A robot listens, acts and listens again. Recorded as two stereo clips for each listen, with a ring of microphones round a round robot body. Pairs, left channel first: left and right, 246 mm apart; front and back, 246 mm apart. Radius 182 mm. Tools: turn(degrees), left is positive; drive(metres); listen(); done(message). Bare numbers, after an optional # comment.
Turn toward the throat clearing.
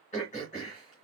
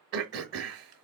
# The throat clearing: 155° left.
turn(155)
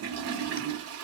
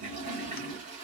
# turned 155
listen()
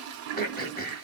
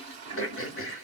# The throat clearing is now 35° left.
turn(35)
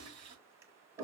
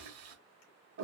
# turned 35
listen()
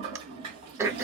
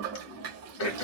# The throat clearing is now 10° right.
turn(-10)
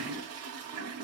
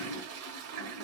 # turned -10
listen()
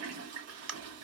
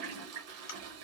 done("Facing the throat clearing, 1 to 2 m away.")